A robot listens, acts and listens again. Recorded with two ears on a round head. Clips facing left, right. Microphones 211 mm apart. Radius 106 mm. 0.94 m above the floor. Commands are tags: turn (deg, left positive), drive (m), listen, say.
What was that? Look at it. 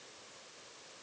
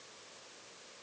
<listen/>
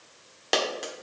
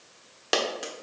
<turn deg="-30"/>
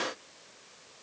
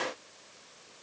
<listen/>
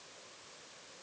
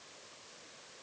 <say>I heard a dropped coin, but can't make it out now. It was about 25° left or 145° right.</say>